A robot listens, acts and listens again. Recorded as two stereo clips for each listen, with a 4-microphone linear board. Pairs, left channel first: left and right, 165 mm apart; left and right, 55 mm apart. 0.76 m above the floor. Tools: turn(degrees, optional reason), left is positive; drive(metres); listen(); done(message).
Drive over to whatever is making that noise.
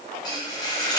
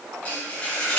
turn(degrees=25, reason="The frying: about 25° left or 155° left.")
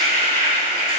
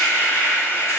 turn(degrees=130, reason="So it is at 130° left.")
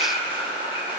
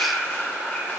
turn(degrees=35, reason="The frying is now 35° left.")
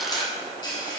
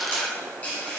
turn(degrees=25, reason="The frying is now 25° left.")
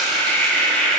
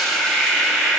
drive(metres=1.0)
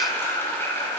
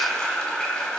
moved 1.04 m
turn(degrees=15, reason="The frying is now 15° left.")
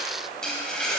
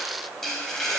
drive(metres=1.0)
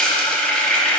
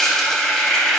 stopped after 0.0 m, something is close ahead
turn(degrees=10, reason="The frying is now 10° left.")
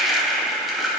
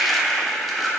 done("Arrived at the frying, straight ahead.")